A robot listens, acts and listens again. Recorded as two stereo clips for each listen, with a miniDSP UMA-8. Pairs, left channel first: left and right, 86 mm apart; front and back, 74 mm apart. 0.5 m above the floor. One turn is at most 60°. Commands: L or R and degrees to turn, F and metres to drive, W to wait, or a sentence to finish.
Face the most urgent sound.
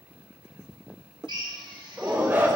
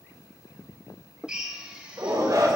R60
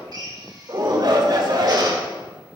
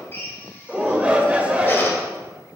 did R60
R60
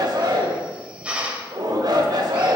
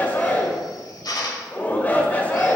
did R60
R60
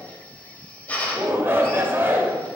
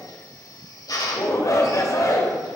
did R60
R30
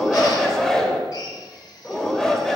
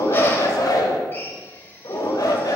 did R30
L10
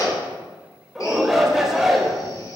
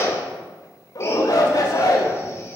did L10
Found it: a shout, straight ahead.